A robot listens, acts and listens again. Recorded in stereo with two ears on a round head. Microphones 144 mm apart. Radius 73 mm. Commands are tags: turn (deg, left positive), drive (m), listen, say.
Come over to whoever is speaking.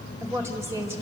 <turn deg="-20"/>
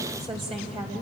<turn deg="-140"/>
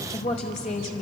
<turn deg="40"/>
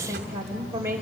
<turn deg="-15"/>
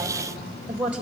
<turn deg="-10"/>
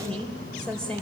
<drive m="1.0"/>
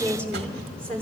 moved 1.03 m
<turn deg="10"/>
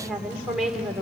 <drive m="1.0"/>
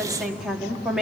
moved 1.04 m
<drive m="1.0"/>
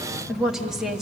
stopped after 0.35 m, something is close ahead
<say>I am next to the woman speaking.</say>